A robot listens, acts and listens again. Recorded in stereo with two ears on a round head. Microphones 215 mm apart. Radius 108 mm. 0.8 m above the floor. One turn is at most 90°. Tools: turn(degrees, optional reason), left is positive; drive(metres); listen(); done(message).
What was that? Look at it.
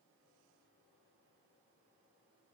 listen()
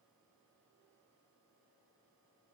listen()
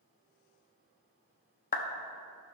turn(degrees=35, reason="The clap: about 35° left or 145° left.")
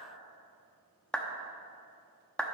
done("Found it: a clap, straight ahead, under 1 m away.")